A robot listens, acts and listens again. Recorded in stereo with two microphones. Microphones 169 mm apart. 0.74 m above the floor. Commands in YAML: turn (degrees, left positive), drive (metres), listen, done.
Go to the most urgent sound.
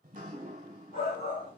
turn: 60
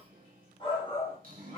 turn: 35
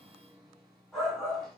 drive: 1.0
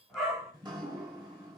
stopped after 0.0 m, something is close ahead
done: "Blocked. The shout is further on, straight ahead."